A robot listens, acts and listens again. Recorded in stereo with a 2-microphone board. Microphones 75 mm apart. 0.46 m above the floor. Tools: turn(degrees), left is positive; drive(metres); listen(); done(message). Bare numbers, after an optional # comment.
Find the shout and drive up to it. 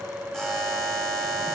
listen()
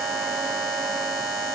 listen()
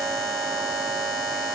done("I can't make out a shout, only a buzzer.")